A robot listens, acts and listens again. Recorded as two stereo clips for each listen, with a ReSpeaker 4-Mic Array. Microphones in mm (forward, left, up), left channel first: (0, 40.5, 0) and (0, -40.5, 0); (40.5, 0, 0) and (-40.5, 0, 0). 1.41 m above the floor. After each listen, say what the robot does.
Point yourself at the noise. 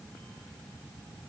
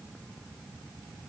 Keep listening.
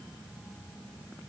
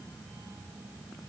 Keep listening.
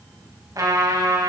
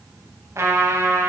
Turn 130° right.
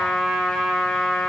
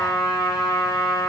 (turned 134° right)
Found it: a trumpet, straight ahead, 2 to 4 m away.